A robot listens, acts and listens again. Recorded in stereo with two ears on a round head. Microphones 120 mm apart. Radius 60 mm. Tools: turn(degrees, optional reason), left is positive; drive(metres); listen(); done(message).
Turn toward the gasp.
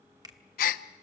turn(degrees=70, reason="The gasp: about 70° left or 110° left.")
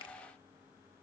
listen()
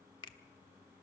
done("I heard a gasp, but can't make it out now. It was about straight ahead or 40° left.")